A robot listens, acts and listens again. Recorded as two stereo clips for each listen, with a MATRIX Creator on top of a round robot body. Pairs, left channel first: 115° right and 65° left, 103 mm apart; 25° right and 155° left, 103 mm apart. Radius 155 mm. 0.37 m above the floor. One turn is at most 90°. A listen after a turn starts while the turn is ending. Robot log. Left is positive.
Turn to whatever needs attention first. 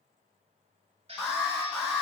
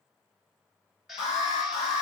note: The alarm: 20° right.
cmd yaw -20
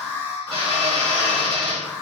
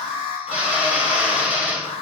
end: Facing the alarm, 2 to 4 m away.